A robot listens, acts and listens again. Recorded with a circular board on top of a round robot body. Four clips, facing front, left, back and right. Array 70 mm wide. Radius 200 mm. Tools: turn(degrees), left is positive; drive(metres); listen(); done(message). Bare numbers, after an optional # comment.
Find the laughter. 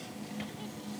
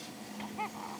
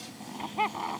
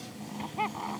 # The laughter: 160° right.
turn(-160)
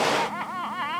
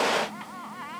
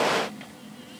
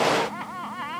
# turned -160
# The laughter is now 15° right.
turn(-15)
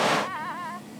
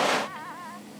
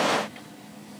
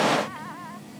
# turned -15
done("Facing the laughter.")